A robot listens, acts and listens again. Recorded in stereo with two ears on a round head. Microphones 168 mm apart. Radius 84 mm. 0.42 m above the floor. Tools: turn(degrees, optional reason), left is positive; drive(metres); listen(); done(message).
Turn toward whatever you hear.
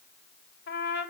turn(degrees=55, reason="The trumpet: about 55° left or 125° left.")
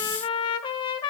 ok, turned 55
turn(degrees=30, reason="So it is at 30° left.")
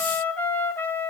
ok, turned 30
turn(degrees=10, reason="The trumpet is now 10° left.")
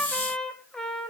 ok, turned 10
done("Facing the trumpet, 1 to 2 m away.")